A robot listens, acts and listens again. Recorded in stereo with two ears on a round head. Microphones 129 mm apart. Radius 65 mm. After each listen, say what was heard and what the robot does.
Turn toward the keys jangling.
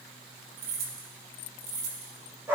The keys jangling: about 75° right or 105° right. Turn 75° right.
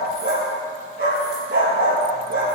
Keep listening.
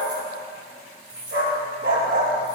So it is at 10° right. Turn 10° right.
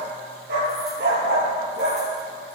Keep listening.
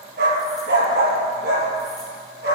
Keep listening.
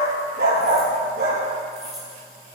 Facing the keys jangling, over 4 m away.